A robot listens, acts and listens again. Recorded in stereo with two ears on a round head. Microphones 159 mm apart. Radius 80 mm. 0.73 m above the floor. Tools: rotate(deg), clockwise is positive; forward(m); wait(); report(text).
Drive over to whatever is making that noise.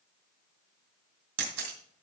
rotate(90)
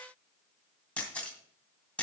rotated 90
forward(1.0)
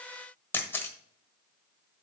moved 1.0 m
rotate(-15)
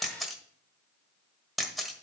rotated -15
forward(1.0)
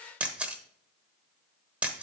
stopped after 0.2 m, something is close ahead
report("Arrived at the camera shutter, straight ahead.")